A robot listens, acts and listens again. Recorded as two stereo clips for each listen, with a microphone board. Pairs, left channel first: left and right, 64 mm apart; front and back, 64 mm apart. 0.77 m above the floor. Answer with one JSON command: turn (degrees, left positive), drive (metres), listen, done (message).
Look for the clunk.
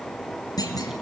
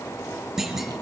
{"turn": 95}
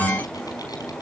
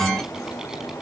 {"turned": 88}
{"turn": 10}
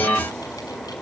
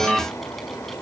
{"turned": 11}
{"done": "I heard a clunk from this way, but can't make it out now."}